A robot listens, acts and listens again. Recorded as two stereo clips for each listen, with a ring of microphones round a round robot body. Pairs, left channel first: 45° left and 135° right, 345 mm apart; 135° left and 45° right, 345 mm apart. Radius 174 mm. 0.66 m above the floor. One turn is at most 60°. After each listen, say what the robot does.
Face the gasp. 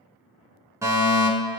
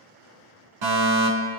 Keep listening.
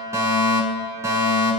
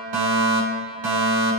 Keep listening.
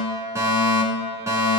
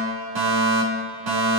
I can't make out a gasp to turn to.